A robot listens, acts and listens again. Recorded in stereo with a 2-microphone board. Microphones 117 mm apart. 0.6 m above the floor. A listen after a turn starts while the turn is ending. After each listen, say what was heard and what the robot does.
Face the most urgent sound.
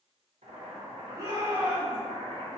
The shout: about 35° right or 145° right. Turn 35° right.
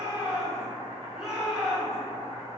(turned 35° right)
Found it: a shout, straight ahead, 1 to 2 m away.